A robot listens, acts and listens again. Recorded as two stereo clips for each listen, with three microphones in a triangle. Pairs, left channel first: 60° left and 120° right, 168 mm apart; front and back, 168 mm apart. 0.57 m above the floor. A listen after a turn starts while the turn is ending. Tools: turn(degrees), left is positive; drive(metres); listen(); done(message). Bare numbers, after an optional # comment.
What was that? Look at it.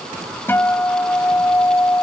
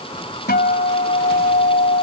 # The guitar: 15° right.
turn(-15)
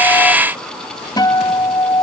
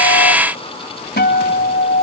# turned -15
done("Facing the guitar.")